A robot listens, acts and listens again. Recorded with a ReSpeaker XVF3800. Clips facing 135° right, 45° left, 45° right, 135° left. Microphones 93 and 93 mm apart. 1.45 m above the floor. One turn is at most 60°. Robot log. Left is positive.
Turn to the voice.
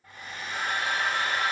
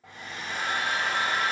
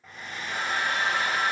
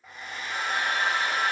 cmd idle
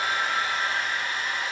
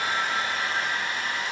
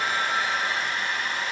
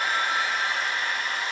cmd idle
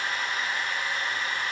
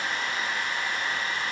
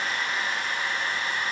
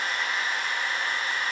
end: I can't make out anyone speaking to turn to.